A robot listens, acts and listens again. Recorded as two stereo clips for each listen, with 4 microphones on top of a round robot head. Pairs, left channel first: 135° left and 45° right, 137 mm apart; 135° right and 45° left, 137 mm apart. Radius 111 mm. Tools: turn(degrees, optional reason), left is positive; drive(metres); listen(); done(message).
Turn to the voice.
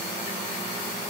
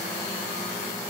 listen()
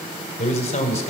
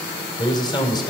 turn(degrees=170, reason="The man speaking: 170° left.")
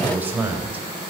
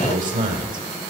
turn(degrees=30, reason="The man speaking is now 30° left.")
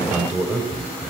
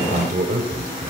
turn(degrees=30, reason="The man speaking is now 30° left.")
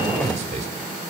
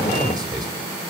turn(degrees=-10, reason="The man speaking is now 10° right.")
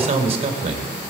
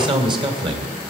done("Found it: a man speaking, straight ahead, 2 to 4 m away.")